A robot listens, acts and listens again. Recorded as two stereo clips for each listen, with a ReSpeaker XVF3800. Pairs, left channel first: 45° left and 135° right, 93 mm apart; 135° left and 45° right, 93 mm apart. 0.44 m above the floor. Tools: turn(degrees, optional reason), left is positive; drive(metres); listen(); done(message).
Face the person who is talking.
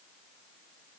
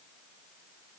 listen()
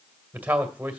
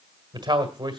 turn(degrees=-65, reason="The man speaking: 65° right.")
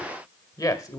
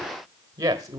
done("Found it: a man speaking, straight ahead.")